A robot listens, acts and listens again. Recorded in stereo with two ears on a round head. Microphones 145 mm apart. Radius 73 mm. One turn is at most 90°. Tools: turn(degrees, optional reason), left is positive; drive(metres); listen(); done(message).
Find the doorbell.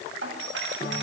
turn(degrees=-90)
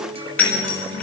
turn(degrees=10, reason="So it is at 10° left.")
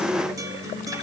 listen()
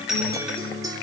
done("Found it: a doorbell, straight ahead.")